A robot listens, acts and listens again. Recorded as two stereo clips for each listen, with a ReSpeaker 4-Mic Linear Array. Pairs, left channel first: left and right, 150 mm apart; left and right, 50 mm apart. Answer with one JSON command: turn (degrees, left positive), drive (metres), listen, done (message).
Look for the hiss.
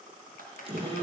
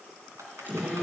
{"listen": true}
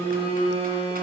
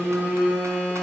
{"listen": true}
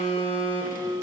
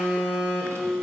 {"done": "I can't make out a hiss to turn to."}